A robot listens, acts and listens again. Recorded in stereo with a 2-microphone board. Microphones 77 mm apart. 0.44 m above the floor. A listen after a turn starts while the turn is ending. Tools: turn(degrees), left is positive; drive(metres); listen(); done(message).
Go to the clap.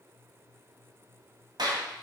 turn(degrees=-70)
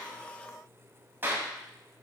turn(degrees=-30)
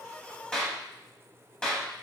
turn(degrees=10)
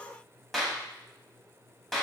drive(metres=1.0)
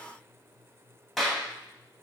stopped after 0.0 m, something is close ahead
done("Something is in my way. I am facing the clap but have not reached it.")